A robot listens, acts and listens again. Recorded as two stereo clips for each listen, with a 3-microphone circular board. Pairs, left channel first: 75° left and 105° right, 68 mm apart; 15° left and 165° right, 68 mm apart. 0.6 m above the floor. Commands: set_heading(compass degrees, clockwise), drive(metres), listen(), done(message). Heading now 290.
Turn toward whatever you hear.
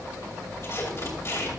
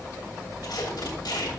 set_heading(265)
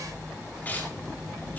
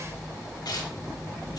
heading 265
set_heading(255)
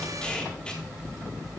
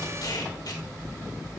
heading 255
done("Facing the tape being pulled, 2 to 4 m away.")